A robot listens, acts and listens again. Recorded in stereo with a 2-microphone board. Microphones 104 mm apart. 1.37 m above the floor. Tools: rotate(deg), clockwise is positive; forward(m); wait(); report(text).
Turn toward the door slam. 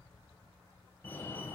wait()
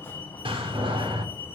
rotate(70)
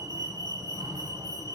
wait()
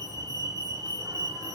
report("I heard a door slam, but can't make it out now. It was about straight ahead or 40° right.")